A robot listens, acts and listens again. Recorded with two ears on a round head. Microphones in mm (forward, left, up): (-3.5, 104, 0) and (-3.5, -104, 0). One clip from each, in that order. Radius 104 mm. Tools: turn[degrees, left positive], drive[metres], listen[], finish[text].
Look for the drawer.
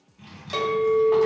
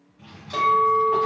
Thought: The drawer: about 35° left or 145° left.
Action: turn[35]
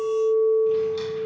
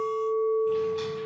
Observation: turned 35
Action: listen[]
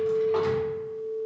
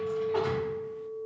Action: listen[]
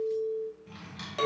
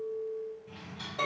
Thought: So it is at 105° left.
Action: turn[105]
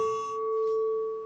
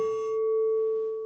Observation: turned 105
Action: listen[]
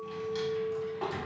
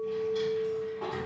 Thought: The drawer is now 40° left.
Action: turn[40]
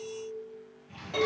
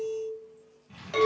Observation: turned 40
Action: finish[Facing the drawer.]